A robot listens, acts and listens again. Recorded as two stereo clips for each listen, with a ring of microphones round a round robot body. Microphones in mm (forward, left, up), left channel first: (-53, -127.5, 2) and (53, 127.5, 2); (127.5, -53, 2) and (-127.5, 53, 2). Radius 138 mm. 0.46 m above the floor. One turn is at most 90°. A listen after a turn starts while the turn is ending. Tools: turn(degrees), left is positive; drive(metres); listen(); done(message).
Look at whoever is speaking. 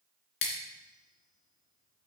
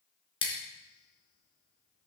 listen()
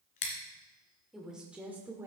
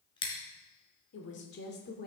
done("Found it: a woman speaking, straight ahead, 1 to 2 m away.")